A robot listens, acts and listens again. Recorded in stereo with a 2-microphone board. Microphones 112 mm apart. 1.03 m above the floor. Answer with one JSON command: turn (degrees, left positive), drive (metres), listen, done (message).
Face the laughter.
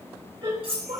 {"turn": -60}
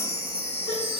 {"listen": true}
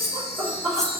{"turn": -50}
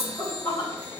{"turn": 15}
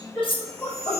{"done": "Found it: laughter, straight ahead."}